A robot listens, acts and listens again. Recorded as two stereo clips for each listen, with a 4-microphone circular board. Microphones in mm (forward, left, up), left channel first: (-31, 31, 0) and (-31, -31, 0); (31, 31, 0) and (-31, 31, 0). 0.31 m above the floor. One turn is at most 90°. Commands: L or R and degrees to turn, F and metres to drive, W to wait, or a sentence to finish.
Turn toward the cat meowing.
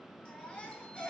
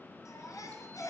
W
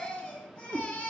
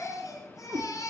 R90
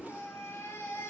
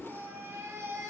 R55
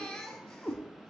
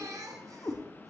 Facing the cat meowing, over 4 m away.